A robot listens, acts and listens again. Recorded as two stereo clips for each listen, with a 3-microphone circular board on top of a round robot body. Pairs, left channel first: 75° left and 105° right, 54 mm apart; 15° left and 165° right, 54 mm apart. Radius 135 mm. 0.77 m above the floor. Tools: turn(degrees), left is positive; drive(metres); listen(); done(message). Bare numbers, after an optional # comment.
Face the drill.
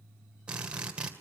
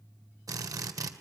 # The drill: 175° right.
turn(-175)
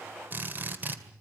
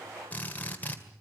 # The drill is now 50° right.
turn(-50)
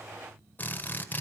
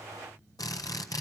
# The drill is now 20° left.
turn(20)
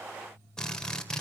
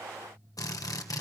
done("Found it: a drill, straight ahead, 2 to 4 m away.")